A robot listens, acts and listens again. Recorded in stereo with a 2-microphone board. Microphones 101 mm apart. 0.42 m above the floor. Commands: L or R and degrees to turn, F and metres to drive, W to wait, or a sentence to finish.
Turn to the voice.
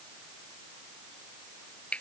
W
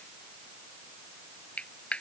W
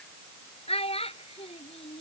L90
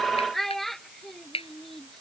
Found it: a child speaking, straight ahead.